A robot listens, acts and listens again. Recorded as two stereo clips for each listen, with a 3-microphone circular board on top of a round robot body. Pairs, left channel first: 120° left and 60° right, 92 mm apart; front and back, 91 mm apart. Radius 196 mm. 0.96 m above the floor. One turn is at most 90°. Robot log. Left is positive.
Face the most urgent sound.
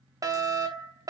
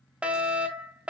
note: The fire alarm: 105° right.
cmd yaw -90
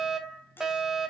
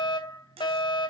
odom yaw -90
note: The fire alarm is now 25° left.
cmd yaw +25
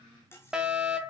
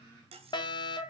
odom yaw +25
note: The fire alarm is now 20° left.
cmd yaw +20
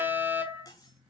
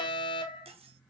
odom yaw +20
note: The fire alarm is now 10° left.
cmd yaw +10
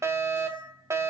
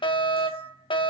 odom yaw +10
end: Facing the fire alarm.